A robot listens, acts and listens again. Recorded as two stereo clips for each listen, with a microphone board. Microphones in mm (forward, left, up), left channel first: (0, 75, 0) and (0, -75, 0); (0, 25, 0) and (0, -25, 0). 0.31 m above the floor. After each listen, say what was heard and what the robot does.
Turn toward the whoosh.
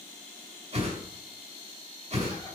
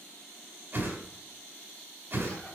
The whoosh: about 45° right or 135° right. Turn 45° right.
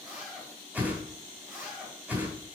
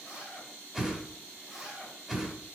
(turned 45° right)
So it is at 15° right. Turn 15° right.
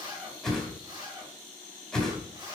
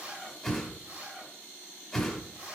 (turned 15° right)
Found it: a whoosh, straight ahead, 1 to 2 m away.